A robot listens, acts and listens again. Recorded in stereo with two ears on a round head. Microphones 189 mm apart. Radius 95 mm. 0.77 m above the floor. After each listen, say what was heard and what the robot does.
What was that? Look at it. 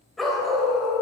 Turn 30° left.
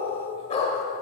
So it is at 150° left. Turn 150° left.
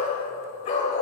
The dog barking is now 35° left. Turn 35° left.
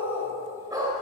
The dog barking is now 15° right. Turn 15° right.
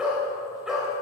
Found it: a dog barking, straight ahead, 1 to 2 m away.